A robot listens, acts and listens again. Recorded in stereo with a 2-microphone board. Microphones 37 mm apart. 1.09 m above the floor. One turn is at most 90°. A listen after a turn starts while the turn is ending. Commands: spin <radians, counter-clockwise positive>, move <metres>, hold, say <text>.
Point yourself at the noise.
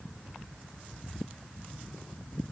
hold
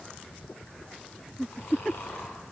spin 1.57
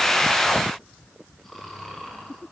say Found it: snoring, straight ahead, over 4 m away.